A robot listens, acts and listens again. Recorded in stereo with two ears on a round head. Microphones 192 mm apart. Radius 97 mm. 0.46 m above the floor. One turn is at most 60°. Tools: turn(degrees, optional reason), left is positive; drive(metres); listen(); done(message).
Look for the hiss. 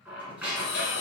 turn(degrees=55, reason="The hiss: about 55° left or 125° left.")
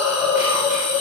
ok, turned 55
turn(degrees=15, reason="So it is at 15° left.")
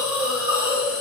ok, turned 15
done("Found it: a hiss, straight ahead.")